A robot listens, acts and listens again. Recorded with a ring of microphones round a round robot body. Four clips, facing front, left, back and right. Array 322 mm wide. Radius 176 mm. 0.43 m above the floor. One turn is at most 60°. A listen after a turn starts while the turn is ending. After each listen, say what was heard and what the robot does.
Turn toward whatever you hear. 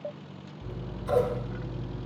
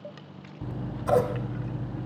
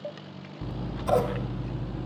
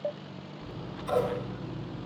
The scissors: 135° left. Turn 60° left.
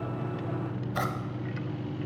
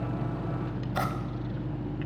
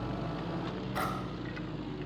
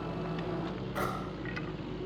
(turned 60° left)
The scissors is now 65° left. Turn 60° left.
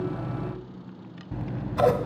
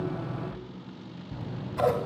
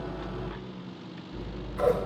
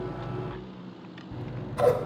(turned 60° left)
Facing the scissors.